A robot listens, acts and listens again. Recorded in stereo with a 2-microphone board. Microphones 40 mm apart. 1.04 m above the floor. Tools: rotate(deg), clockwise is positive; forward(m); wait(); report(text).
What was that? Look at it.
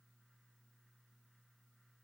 wait()
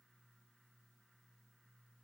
wait()
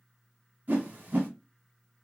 rotate(45)
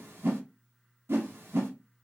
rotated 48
rotate(85)
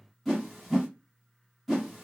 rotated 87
report("Facing the whoosh, 1 to 2 m away.")